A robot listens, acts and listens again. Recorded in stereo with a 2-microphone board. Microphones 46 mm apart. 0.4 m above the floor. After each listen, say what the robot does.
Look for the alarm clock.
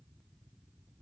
Keep listening.
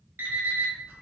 Turn 60° right.
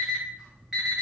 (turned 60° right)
Facing the alarm clock, 1 to 2 m away.